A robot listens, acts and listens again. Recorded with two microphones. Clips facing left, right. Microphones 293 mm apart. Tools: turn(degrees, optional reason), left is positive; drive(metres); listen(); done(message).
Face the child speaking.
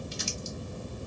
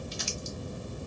listen()
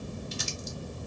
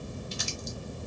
listen()
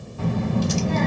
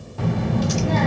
turn(degrees=-90)
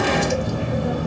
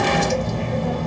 turn(degrees=10, reason="So it is at 10° left.")
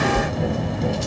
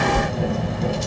done("Found it: a child speaking, straight ahead, 1 to 2 m away.")